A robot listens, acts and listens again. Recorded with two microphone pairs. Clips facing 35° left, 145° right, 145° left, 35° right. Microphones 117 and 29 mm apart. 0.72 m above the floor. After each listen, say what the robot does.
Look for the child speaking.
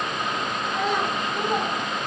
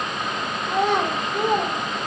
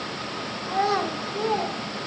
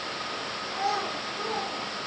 Turn 160° right.
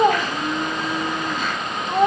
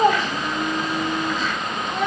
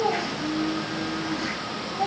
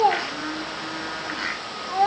Turn 10° right.
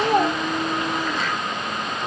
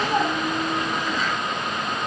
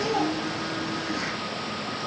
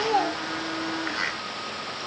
Turn 10° left.
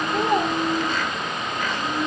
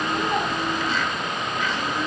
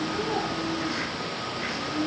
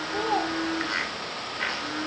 Turn 15° left.
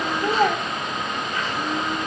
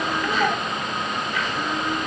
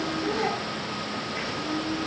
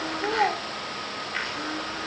Facing the child speaking.